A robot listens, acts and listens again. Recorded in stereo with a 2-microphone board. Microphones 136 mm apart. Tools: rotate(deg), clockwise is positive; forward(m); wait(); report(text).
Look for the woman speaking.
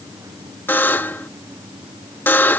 wait()
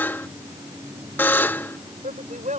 rotate(90)
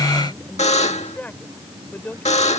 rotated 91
rotate(-10)
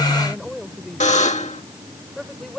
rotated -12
report("Facing the woman speaking.")